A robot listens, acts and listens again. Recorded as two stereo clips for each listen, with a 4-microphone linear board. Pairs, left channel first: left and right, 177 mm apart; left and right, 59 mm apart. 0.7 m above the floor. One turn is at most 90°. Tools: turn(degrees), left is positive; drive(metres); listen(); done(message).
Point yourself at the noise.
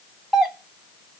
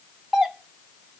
turn(degrees=30)
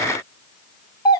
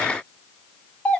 turn(degrees=90)
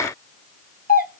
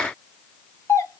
turn(degrees=65)
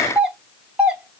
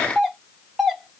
done("Facing the doorbell.")